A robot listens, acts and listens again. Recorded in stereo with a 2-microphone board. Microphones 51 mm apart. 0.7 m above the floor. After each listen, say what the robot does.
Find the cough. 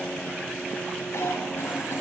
Turn 60° left.
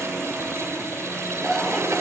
Facing the cough, 2 to 4 m away.